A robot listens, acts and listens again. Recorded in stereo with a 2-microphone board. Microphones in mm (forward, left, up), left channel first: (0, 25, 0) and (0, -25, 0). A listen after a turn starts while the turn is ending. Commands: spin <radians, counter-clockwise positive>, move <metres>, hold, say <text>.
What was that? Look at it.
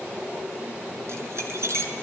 spin -1.13
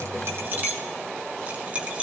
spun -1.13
spin -0.52
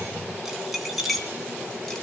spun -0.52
say Found it: keys jangling, straight ahead, 2 to 4 m away.